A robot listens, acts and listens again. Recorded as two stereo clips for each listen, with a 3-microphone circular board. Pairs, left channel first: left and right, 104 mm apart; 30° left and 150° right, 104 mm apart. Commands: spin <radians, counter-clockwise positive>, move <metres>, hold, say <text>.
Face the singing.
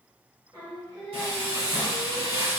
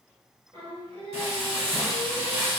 spin -2.27
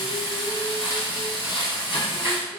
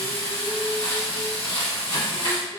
hold
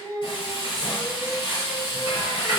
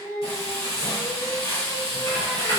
spin 0.52
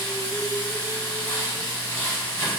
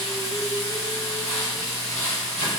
hold
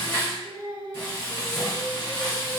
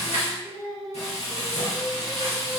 say Facing the singing, 2 to 4 m away.